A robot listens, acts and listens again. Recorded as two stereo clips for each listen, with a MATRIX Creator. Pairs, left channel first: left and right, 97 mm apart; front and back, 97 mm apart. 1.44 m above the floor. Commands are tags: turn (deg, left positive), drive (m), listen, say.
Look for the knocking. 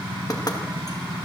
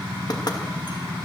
<turn deg="40"/>
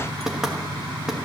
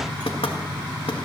<say>Facing the knocking.</say>